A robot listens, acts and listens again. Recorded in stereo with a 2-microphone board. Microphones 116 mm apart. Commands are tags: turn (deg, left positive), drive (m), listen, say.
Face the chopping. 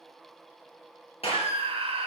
<listen/>
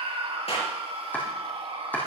<turn deg="15"/>
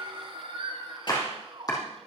<turn deg="145"/>
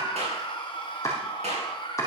<turn deg="25"/>
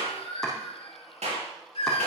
<listen/>
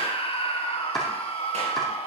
<say>Found it: chopping, straight ahead.</say>